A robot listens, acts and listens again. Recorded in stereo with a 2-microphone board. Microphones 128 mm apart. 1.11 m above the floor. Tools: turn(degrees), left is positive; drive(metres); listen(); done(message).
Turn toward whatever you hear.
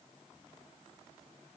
listen()
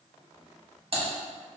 turn(degrees=-45)
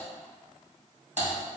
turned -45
turn(degrees=-85)
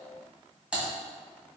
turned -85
turn(degrees=-10)
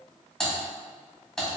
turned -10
done("Found it: typing on a keyboard, straight ahead.")